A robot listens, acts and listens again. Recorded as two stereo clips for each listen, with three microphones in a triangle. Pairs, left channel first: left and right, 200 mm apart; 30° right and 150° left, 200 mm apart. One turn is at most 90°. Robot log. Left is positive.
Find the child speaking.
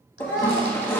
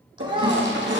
note: The child speaking: 85° left.
cmd yaw +85
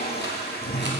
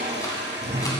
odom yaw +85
cmd idle
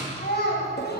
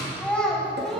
note: The child speaking is now 60° left.
cmd yaw +60
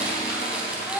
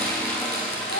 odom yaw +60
end: Facing the child speaking, over 4 m away.